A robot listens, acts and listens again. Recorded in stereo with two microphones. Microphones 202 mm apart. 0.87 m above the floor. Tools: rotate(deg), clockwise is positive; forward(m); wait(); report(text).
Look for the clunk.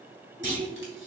rotate(-65)
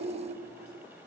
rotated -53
wait()
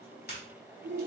report("I heard a clunk, but can't make it out now. It was about 10° left or 60° left.")